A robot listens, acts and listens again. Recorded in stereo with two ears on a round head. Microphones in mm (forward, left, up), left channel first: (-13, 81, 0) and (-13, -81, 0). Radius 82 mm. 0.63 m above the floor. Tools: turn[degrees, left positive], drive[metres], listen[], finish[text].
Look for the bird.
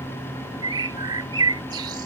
Thought: The bird: about 25° right or 155° right.
Action: turn[-25]
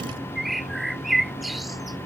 Action: finish[Found it: a bird, straight ahead.]